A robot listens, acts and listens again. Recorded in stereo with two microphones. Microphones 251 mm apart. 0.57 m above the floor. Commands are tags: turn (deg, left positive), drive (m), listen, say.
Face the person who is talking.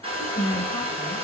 <turn deg="15"/>
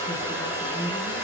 <turn deg="25"/>
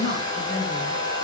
<turn deg="130"/>
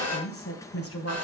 <turn deg="60"/>
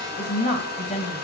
<turn deg="30"/>
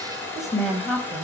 <say>Facing the woman speaking, 2 to 4 m away.</say>